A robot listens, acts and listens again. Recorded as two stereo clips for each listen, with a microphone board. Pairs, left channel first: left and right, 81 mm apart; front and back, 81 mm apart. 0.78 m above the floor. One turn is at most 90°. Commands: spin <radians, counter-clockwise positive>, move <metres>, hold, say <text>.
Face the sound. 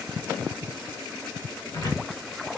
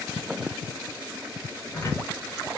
spin 0.87
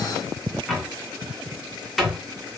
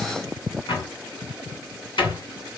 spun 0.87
say Facing the cupboard door, 2 to 4 m away.